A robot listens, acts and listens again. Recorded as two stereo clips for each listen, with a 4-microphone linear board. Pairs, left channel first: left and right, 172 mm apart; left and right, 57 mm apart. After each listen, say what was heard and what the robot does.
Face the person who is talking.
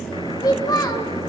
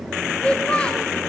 The child speaking: about 20° left or 160° left. Turn 20° left.
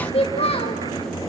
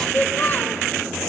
So it is at 135° left. Turn 135° left.
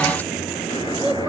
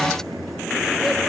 Keep listening.
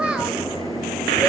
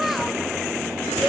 Found it: a child speaking, straight ahead, 1 to 2 m away.